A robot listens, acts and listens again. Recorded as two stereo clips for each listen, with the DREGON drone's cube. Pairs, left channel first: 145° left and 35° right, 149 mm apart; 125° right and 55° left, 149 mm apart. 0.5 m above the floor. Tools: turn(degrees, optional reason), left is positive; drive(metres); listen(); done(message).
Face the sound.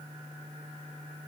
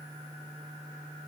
listen()
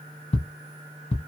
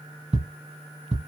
turn(degrees=100, reason="The ticking: 100° left.")
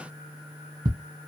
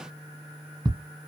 done("Facing the ticking, under 1 m away.")